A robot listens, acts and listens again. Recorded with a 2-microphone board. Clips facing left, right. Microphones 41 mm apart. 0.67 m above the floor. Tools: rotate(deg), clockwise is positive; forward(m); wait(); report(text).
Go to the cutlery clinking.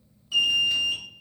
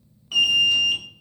wait()
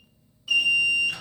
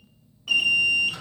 wait()
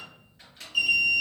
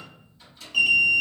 report("I can't make out cutlery clinking to turn to.")